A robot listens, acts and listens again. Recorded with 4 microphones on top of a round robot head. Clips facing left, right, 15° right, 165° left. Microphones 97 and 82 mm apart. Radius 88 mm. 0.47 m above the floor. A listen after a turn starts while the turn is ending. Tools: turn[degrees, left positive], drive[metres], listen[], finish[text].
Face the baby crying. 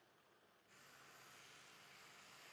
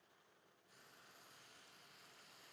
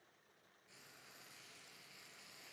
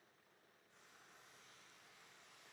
Action: listen[]
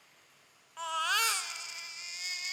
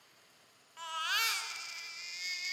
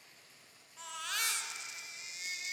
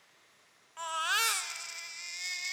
Thought: The baby crying: 135° left.
Action: turn[135]
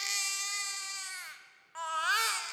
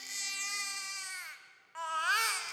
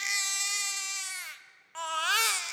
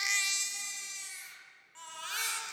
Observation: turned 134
Action: finish[Facing the baby crying, 1 to 2 m away.]